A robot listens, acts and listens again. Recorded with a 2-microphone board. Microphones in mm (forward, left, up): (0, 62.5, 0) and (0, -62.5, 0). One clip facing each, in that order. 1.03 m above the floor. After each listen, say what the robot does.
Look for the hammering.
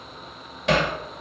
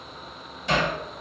Turn 70° left.
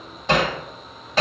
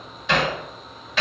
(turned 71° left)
Turn 40° left.
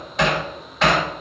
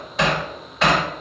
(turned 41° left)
Found it: hammering, straight ahead.